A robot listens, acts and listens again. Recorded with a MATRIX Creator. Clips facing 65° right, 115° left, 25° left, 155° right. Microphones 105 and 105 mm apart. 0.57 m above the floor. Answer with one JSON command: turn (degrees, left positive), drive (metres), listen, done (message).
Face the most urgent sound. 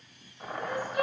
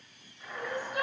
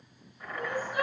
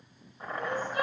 {"turn": 100}
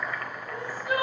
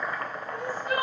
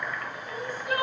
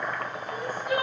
{"turn": 10}
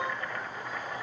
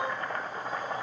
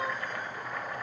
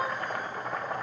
{"listen": true}
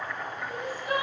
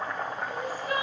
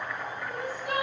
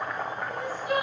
{"done": "Facing the crying."}